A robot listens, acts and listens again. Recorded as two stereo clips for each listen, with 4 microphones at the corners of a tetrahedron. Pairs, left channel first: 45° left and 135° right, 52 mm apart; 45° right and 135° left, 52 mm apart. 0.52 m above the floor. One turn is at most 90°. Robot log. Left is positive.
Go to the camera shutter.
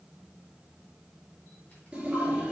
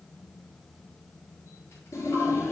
cmd idle
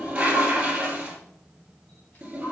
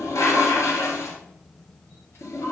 cmd idle
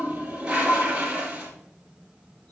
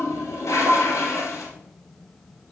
end: I can't make out a camera shutter to turn to.